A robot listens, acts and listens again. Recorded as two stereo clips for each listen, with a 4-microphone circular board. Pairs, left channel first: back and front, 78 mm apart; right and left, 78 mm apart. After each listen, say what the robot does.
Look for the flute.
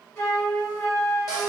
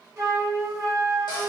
Turn 130° left.
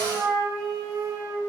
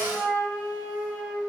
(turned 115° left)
Turn 15° left.
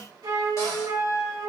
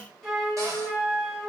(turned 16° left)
Found it: a flute, straight ahead.